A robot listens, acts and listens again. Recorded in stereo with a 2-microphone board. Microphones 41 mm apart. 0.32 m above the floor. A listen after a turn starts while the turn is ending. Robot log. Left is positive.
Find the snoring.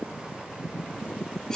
cmd idle
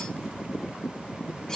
cmd idle
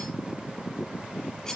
end: I can't make out snoring, only cutlery clinking.